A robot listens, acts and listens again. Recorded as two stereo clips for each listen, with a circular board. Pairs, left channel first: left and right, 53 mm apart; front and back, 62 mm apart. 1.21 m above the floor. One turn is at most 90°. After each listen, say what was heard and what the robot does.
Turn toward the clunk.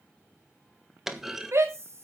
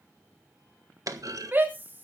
The clunk: 175° right. Turn 90° right.
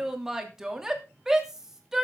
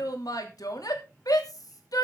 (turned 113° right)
Nothing new. It was at 60° right. Turn 60° right.
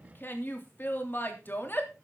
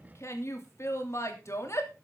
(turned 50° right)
Nothing new. It was at 10° right. Turn 10° right.
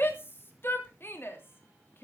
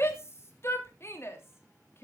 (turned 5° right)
Facing where the clunk came from. I can't hear it now.